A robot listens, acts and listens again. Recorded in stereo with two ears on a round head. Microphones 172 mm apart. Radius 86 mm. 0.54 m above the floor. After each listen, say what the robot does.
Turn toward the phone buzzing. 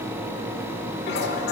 Keep listening.
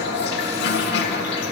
Keep listening.
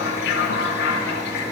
I can't make out a phone buzzing to turn to.